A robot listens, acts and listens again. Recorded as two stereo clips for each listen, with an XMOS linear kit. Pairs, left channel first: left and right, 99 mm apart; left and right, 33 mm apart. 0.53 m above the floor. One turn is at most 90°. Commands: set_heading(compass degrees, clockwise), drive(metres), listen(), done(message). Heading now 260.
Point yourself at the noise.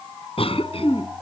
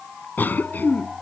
set_heading(170)
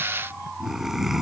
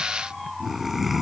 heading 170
done("Found it: a cough, straight ahead.")